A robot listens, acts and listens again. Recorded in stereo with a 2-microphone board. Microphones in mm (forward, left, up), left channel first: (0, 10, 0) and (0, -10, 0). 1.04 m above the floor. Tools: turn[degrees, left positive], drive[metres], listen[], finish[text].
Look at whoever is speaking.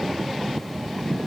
Action: listen[]
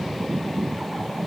Action: listen[]
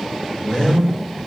Thought: The man speaking: about 55° left or 125° left.
Action: turn[55]
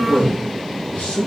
Thought: So it is at 70° left.
Action: turn[70]
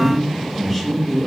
Thought: The man speaking is now 10° left.
Action: turn[10]
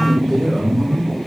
Action: finish[Found it: a man speaking, straight ahead.]